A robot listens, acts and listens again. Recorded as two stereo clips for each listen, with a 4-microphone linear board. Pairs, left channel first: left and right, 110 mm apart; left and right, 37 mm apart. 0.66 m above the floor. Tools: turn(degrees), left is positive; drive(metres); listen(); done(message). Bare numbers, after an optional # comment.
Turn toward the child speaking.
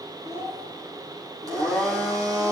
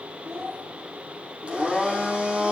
turn(-90)
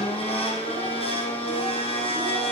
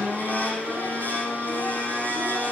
listen()
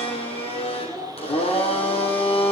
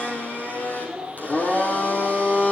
done("Facing the child speaking, over 4 m away.")